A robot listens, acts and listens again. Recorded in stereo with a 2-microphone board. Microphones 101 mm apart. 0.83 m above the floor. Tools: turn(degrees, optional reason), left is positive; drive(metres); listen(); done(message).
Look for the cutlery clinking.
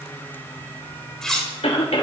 turn(degrees=30)
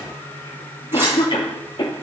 listen()
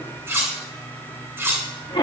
turn(degrees=-25, reason="So it is at 25° right.")
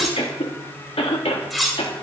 done("Found it: cutlery clinking, straight ahead.")